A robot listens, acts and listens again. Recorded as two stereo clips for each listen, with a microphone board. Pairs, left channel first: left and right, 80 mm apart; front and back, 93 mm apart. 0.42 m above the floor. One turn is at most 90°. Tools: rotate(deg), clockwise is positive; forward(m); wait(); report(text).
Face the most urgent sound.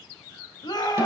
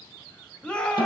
rotate(-75)
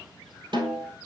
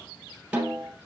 wait()
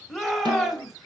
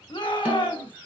report("Facing the shout.")